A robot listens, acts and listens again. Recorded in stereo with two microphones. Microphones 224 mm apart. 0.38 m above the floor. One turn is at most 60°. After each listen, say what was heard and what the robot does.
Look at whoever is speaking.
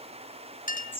Keep listening.
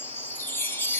Keep listening.
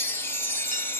I can't make out anyone speaking, only a chime and a clink.